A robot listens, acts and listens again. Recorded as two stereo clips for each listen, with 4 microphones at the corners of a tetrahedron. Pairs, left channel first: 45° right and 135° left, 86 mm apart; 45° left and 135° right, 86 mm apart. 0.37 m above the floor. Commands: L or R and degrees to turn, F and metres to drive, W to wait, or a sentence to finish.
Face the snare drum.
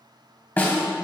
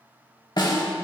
L20
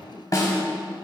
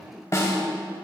Facing the snare drum, 1 to 2 m away.